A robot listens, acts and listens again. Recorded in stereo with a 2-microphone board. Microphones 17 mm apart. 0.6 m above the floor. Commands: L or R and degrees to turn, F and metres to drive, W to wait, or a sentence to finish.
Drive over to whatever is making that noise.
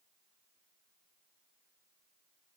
W
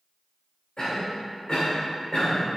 L50
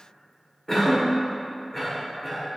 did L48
L10
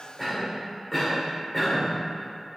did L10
F1.0
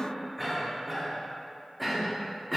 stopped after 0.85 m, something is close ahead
I am next to the cough.